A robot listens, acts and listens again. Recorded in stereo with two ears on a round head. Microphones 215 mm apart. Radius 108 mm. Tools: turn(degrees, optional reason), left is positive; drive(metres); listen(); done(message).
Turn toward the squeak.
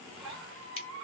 turn(degrees=-55, reason="The squeak: about 55° right or 125° right.")
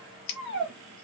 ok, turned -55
turn(degrees=-60, reason="So it is at 60° right.")
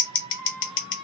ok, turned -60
turn(degrees=-20, reason="The squeak is now 20° right.")
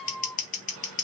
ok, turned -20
done("Facing the squeak.")